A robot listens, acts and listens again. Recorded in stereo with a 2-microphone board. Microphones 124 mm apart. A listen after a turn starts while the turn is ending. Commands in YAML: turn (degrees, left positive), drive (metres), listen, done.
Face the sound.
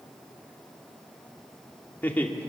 turn: 30
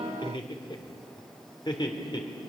turn: 145
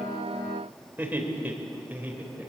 turn: -10
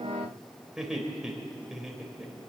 done: "Facing the laughter."